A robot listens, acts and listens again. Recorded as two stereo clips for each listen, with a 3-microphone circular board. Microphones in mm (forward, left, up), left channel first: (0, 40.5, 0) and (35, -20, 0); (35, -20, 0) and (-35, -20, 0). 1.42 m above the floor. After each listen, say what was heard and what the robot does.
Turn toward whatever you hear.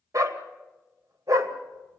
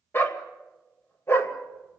The dog barking: 45° right. Turn 45° right.
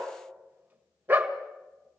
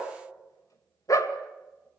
Found it: a dog barking, straight ahead.